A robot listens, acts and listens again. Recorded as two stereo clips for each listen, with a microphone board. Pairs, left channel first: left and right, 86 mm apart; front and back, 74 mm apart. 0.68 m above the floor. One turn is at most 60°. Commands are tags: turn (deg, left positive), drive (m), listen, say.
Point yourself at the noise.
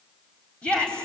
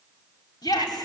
<turn deg="15"/>
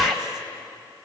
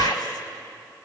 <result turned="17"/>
<say>Found it: a shout, straight ahead, over 4 m away.</say>